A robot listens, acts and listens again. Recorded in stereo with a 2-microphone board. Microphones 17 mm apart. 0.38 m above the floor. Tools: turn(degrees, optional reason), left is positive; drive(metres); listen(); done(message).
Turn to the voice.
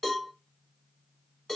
listen()
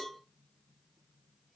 listen()
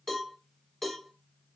done("I can't make out anyone speaking to turn to.")